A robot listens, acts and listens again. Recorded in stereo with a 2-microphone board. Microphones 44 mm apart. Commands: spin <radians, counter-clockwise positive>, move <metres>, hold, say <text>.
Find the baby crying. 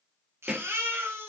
spin -1.22
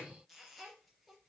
hold
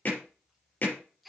say Found it: a baby crying, straight ahead.